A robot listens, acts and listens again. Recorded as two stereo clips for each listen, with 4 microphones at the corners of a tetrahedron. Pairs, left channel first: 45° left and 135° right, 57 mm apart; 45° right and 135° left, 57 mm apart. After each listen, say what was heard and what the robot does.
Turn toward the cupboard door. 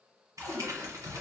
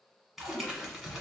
The cupboard door: 155° left. Turn 155° left.
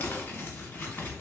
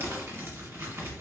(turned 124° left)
Nothing new. It was at 30° left. Turn 30° left.
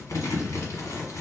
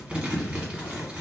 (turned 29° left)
Keep listening.
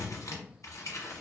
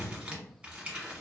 I heard a cupboard door from this way, but can't make it out now.